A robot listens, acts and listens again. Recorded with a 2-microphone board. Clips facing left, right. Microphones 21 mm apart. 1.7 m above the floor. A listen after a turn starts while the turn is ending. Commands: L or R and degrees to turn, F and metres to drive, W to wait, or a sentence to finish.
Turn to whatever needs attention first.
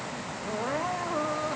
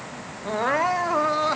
R60
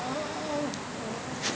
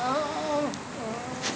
R50
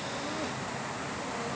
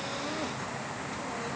W
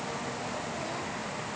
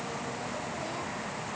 W
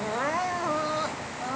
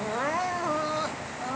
Facing the crying.